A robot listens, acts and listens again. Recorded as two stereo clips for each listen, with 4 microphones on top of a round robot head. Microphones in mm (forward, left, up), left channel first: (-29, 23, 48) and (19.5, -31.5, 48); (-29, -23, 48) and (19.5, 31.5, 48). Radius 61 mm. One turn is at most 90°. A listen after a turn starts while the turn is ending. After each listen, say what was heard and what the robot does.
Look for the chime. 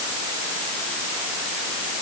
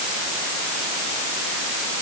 Keep listening.
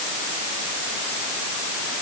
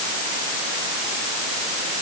Keep listening.
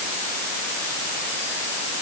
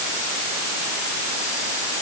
I can't make out a chime.